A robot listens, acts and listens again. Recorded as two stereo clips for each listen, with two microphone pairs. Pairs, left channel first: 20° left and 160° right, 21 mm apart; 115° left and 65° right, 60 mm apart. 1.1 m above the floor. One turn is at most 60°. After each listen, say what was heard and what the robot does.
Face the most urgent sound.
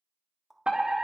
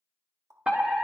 The fire alarm: 135° right. Turn 60° right.
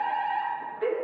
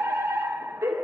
The fire alarm is now 70° right. Turn 60° right.
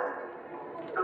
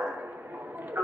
The fire alarm is now 15° right. Turn 15° right.
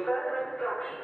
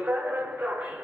Facing the fire alarm, 2 to 4 m away.